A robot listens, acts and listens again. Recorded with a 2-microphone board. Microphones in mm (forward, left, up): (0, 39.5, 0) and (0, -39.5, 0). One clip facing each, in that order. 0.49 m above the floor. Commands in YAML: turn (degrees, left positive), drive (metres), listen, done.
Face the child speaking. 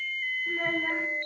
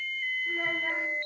turn: -30
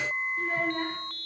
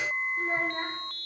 turn: -140
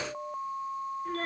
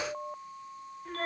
done: "Facing the child speaking, 1 to 2 m away."